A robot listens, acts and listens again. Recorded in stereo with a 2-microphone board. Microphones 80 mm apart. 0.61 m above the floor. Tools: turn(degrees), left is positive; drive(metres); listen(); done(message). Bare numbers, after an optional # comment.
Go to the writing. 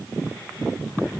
listen()
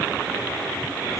listen()
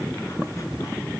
done("I can't make out writing.")